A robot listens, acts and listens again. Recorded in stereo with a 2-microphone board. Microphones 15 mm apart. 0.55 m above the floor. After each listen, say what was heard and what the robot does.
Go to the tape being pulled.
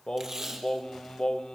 The tape being pulled: about 35° right or 145° right. Turn 35° right.
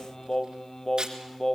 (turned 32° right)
So it is at 115° right. Turn 115° right.
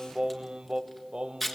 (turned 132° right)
The tape being pulled is now 20° left. Turn 20° left.
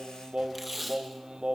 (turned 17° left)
Drive 1.0 m forward.
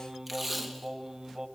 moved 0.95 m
Drive 1.0 m forward.
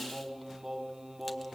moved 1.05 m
Keep listening.
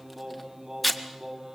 The tape being pulled is now 10° left. Turn 10° left.
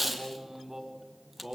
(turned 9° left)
Drive 1.0 m forward.
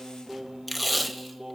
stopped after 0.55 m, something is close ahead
Arrived at the tape being pulled, straight ahead.